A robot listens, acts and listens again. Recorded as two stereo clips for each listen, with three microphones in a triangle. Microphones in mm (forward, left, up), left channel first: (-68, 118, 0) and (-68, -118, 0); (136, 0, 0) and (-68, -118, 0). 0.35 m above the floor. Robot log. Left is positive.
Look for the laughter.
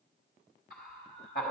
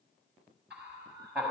note: The laughter: 125° left.
cmd yaw +125
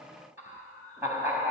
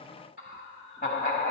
note: The laughter is now 10° right.
cmd yaw -10
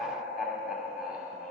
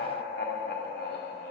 end: Found it: laughter, straight ahead.